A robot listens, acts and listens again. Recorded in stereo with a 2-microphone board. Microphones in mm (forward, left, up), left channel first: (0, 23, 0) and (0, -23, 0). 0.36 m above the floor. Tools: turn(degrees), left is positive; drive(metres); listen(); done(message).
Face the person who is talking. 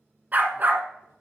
listen()
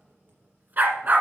listen()
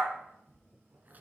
done("I can't make out anyone speaking, only writing and a dog barking.")